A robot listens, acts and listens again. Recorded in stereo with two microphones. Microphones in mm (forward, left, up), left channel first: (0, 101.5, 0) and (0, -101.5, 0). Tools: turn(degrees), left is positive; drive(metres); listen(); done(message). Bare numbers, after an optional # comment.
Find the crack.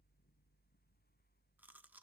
listen()
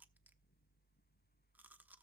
listen()
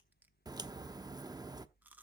# The crack: about 20° right or 160° right.
turn(-20)
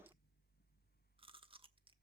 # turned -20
listen()
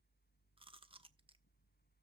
done("I heard a crack, but can't make it out now. It was about straight ahead or 140° right.")